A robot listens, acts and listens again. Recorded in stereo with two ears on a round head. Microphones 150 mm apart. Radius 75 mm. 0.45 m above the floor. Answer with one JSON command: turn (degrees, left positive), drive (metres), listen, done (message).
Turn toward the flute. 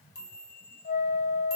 {"turn": 50}
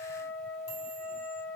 {"turn": 10}
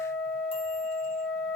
{"done": "Facing the flute."}